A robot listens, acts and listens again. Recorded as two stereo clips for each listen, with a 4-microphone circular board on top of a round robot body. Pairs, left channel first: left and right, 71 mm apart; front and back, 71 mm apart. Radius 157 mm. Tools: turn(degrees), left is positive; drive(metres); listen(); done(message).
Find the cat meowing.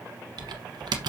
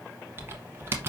listen()
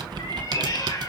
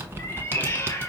turn(degrees=55)
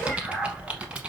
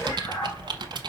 done("Found it: a cat meowing, straight ahead, 2 to 4 m away.")